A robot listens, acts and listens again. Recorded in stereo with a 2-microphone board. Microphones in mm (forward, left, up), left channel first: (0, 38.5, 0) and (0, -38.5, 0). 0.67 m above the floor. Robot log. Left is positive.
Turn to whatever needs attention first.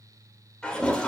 cmd idle
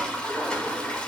cmd idle
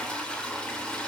end: I can't make out anything urgent, only a toilet flushing.